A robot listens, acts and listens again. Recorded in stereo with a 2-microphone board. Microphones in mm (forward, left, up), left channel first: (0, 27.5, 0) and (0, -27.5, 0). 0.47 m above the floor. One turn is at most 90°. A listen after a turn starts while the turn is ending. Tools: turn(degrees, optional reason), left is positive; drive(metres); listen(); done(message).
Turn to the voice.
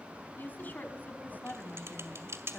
turn(degrees=30, reason="The woman speaking: about 30° left or 150° left.")
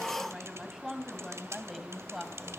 done("Facing the woman speaking.")